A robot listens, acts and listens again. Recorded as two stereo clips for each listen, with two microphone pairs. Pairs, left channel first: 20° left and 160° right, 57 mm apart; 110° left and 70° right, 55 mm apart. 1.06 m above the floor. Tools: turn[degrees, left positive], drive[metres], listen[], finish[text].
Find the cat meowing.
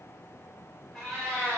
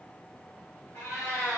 Thought: The cat meowing: 95° left.
Action: turn[95]
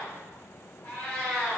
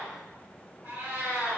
Thought: The cat meowing is now 45° right.
Action: turn[-45]
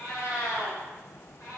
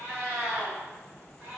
Thought: The cat meowing is now 10° right.
Action: turn[-10]
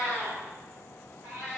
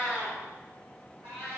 Thought: The cat meowing is now 10° right.
Action: turn[-10]
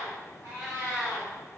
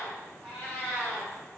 Action: finish[Found it: a cat meowing, straight ahead, 2 to 4 m away.]